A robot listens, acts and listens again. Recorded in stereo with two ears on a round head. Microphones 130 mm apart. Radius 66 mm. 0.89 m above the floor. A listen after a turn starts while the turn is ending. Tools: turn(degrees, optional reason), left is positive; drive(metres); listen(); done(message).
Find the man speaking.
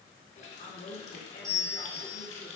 turn(degrees=65, reason="The man speaking: about 65° left or 115° left.")
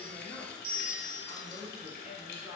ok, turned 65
done("Facing the man speaking, 1 to 2 m away.")